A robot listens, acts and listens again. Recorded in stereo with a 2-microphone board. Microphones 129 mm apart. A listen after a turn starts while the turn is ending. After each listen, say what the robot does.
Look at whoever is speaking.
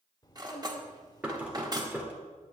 Turn 30° left.
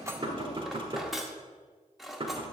Keep listening.
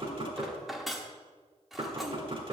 Keep listening.
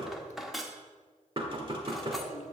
Turn 120° left.
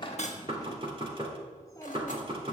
Turn 25° left.
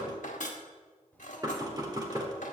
Turn 10° left.
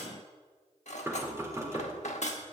Keep listening.
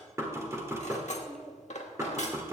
Found it: a child speaking, straight ahead, 1 to 2 m away.